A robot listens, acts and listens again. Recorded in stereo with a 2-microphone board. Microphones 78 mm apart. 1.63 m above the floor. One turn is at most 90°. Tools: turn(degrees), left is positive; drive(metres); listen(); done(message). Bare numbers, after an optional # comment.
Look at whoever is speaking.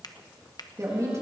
# The woman speaking: about 40° right or 140° right.
turn(-40)
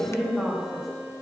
done("Found it: a woman speaking, straight ahead.")